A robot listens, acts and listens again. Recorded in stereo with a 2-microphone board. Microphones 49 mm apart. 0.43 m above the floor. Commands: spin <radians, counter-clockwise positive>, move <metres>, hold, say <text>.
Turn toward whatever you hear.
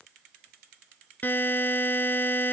spin 0.70
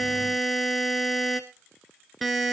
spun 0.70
say Found it: a buzzer, straight ahead, 1 to 2 m away.